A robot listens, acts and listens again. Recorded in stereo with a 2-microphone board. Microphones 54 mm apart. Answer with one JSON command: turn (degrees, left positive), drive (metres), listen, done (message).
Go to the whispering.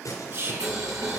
{"turn": -50}
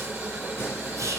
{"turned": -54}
{"listen": true}
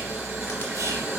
{"listen": true}
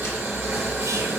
{"done": "I heard whispering, but can't make it out now. It was about 5° left or 75° right. I did not reach it."}